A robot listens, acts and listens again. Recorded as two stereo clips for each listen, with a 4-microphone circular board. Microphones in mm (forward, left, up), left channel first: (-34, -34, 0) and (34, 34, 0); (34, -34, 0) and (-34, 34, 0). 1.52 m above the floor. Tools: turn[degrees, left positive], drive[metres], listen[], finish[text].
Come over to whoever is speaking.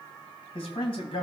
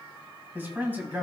Thought: The man speaking: 155° right.
Action: turn[-155]
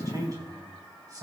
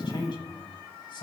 Thought: The man speaking is now 10° right.
Action: turn[-10]
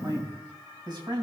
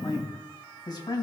Action: drive[1.0]
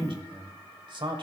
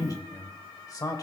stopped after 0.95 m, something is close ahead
Thought: The man speaking is now 10° left.
Action: turn[10]
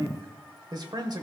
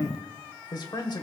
Action: finish[I am next to the man speaking.]